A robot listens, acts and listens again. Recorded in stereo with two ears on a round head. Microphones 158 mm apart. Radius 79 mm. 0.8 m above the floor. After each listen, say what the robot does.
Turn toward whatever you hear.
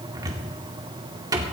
Turn 20° right.
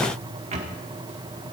Turn 135° right.
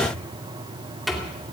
Found it: a cupboard door, straight ahead, 2 to 4 m away.